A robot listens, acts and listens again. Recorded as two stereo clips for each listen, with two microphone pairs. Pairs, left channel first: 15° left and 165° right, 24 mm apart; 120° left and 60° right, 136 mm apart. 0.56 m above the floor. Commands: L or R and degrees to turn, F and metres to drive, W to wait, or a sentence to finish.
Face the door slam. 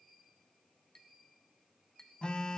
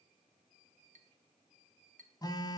W
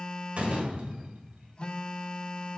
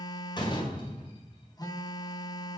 L175
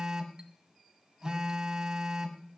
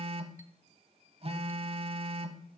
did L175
I heard a door slam from this way, but can't make it out now.